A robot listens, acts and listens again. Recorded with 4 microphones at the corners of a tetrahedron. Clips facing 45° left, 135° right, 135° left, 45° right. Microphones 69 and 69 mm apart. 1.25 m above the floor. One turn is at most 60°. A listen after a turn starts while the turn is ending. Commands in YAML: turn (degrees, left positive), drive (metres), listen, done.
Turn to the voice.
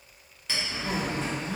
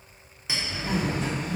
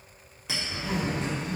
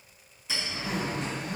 turn: 25
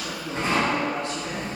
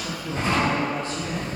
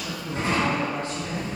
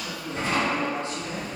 turn: 15
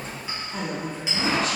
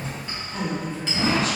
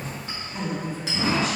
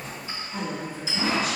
done: "Found it: a woman speaking, straight ahead, 1 to 2 m away."